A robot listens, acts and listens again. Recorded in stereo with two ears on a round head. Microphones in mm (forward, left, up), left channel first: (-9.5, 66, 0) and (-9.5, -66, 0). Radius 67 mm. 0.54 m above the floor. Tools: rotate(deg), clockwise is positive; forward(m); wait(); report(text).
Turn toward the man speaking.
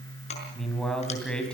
rotate(-30)
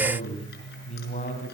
rotate(-130)
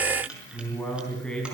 report("Facing the man speaking, over 4 m away.")